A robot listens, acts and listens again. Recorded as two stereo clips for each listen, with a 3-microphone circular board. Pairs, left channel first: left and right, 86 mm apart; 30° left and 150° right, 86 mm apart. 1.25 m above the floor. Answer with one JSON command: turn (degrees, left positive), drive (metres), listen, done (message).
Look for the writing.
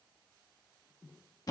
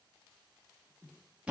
{"listen": true}
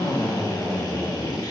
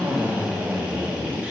{"listen": true}
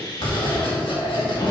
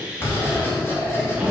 {"turn": 90}
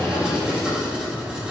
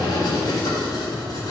{"turn": -10}
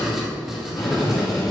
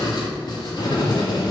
{"done": "Found it: writing, straight ahead."}